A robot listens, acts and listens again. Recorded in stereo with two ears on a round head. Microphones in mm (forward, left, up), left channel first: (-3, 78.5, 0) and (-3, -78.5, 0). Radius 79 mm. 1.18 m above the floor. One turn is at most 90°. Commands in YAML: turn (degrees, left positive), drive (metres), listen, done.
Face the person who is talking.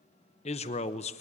turn: 35
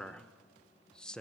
done: "Found it: a man speaking, straight ahead, 1 to 2 m away."